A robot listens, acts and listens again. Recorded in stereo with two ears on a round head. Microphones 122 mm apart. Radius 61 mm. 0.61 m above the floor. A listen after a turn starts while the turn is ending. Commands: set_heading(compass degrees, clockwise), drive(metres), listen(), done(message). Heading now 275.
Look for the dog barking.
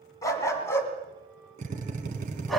set_heading(245)
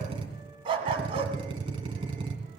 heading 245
set_heading(285)
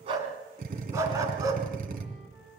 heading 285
set_heading(310)
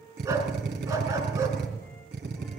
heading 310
set_heading(330)
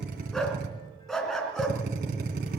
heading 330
done("Facing the dog barking, 2 to 4 m away.")